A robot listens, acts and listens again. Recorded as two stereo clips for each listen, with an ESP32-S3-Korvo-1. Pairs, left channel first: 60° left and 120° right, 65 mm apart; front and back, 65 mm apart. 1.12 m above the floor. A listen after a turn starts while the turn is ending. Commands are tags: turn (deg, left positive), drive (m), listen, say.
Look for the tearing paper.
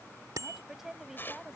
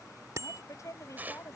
<turn deg="115"/>
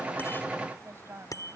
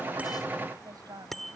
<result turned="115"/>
<listen/>
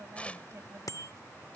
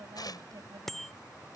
<turn deg="-15"/>
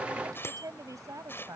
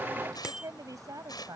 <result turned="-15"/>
<say>Facing the tearing paper.</say>